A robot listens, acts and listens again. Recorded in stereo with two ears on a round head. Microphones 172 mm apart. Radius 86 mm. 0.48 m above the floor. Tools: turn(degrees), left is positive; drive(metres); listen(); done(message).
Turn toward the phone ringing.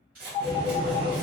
turn(degrees=35)
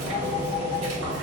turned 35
turn(degrees=105)
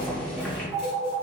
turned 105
turn(degrees=-20)
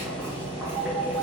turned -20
done("Found it: a phone ringing, straight ahead.")